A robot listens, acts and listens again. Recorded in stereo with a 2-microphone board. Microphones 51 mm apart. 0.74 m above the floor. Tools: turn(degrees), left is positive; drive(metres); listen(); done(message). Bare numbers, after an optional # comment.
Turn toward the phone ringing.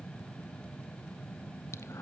listen()
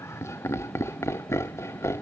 listen()
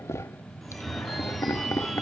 turn(30)
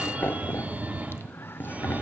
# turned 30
# So it is at 30° right.
turn(-30)
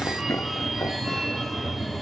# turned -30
done("Facing the phone ringing, 1 to 2 m away.")